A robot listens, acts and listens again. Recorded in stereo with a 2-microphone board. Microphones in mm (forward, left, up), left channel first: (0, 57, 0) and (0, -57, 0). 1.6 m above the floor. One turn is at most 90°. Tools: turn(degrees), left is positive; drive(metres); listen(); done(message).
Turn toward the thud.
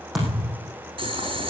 turn(degrees=30)
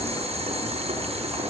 listen()
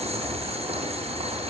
done("I heard a thud, but can't make it out now. It was about 30° right or 150° left.")